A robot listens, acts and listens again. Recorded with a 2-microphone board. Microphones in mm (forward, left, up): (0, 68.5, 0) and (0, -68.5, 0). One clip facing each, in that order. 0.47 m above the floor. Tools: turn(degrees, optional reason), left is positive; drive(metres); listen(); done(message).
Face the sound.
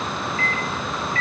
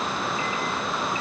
turn(degrees=-15, reason="The microwave: about 15° right or 165° right.")
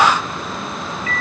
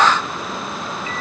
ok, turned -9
turn(degrees=-25, reason="The microwave: about 25° right or 155° right.")
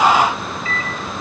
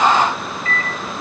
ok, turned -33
turn(degrees=-120, reason="So it is at 120° right.")
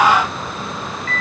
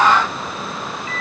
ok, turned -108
turn(degrees=-10, reason="The microwave is now 10° right.")
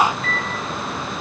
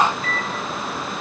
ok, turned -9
done("Facing the microwave.")